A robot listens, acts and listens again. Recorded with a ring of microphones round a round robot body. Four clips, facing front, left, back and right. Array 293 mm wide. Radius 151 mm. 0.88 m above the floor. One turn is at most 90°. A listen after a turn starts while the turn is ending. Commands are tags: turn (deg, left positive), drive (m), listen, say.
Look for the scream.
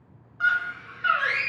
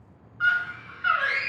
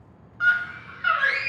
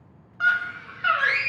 <turn deg="-90"/>
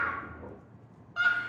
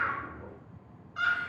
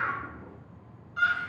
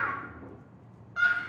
<turn deg="-30"/>
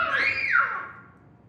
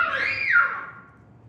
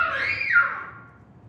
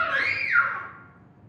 <turn deg="15"/>
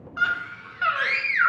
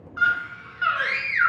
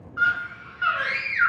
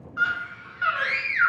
<say>Facing the scream, under 1 m away.</say>